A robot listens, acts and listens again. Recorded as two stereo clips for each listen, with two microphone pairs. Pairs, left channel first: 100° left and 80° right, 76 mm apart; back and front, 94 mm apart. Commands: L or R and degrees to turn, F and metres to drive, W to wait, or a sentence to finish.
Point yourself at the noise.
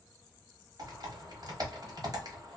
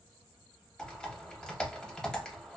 R100
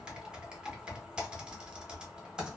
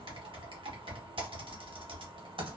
Found it: typing on a keyboard, straight ahead, under 1 m away.